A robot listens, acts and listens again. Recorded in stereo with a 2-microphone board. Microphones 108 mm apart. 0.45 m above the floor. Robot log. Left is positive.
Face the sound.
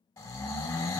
note: The snoring: about 35° left or 145° left.
cmd yaw +35
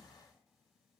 cmd idle
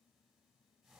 cmd idle
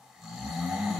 end: Facing the snoring, under 1 m away.